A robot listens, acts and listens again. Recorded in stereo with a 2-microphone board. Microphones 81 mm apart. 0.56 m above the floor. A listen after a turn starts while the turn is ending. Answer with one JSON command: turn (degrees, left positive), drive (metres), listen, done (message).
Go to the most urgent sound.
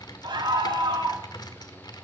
{"turn": -75}
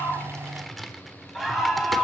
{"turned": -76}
{"drive": 1.0}
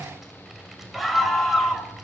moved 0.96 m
{"drive": 1.0}
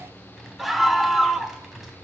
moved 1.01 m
{"drive": 1.0}
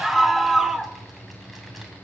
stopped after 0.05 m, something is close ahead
{"done": "Arrived at the scream, straight ahead."}